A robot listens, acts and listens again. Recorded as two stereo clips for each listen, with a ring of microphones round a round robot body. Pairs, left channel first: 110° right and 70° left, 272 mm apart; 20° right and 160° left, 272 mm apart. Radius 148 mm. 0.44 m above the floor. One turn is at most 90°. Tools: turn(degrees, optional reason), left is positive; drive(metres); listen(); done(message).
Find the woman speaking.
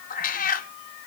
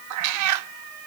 listen()
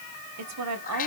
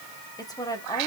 turn(degrees=55, reason="The woman speaking: 55° left.")
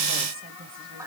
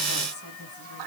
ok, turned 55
turn(degrees=10, reason="The woman speaking is now 10° left.")
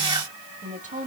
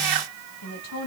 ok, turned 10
done("Facing the woman speaking, 2 to 4 m away.")